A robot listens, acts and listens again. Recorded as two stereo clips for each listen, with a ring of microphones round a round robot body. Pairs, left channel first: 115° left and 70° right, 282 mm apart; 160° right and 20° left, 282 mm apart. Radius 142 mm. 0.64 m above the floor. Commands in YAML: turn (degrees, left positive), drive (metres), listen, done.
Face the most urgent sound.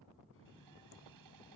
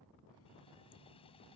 listen: true
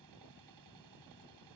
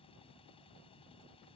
listen: true
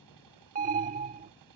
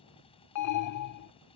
turn: -130
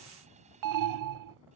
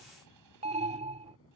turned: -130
turn: -45
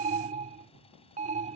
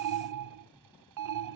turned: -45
done: "Facing the alarm."